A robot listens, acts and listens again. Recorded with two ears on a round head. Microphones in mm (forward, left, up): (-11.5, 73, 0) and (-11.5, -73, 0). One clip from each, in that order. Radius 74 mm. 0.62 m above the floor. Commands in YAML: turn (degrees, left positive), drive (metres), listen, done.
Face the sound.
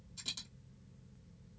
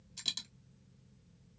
turn: -50
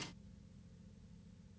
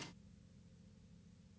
listen: true
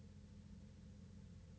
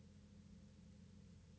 done: "I heard a dropped coin, but can't make it out now. It was about straight ahead or 80° right."